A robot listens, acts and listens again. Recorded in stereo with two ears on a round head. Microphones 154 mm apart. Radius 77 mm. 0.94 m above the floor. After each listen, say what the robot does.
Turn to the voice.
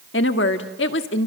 Turn 75° left.
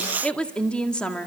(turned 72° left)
Facing the woman speaking.